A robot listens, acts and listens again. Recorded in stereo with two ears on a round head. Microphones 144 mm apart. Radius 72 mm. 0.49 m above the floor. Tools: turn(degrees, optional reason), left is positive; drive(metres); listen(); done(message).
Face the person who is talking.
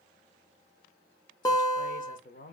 turn(degrees=55, reason="The man speaking: about 55° left or 125° left.")
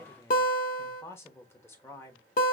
turn(degrees=20, reason="So it is at 20° left.")
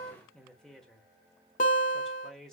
done("Facing the man speaking.")